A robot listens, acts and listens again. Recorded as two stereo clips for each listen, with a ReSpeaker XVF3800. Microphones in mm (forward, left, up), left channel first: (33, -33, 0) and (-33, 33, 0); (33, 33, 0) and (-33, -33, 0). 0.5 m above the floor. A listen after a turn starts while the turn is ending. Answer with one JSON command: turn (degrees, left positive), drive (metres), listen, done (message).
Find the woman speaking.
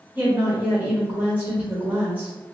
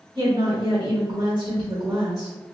{"turn": -155}
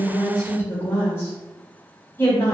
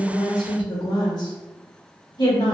{"turn": 15}
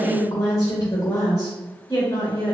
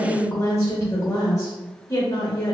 {"done": "Found it: a woman speaking, straight ahead."}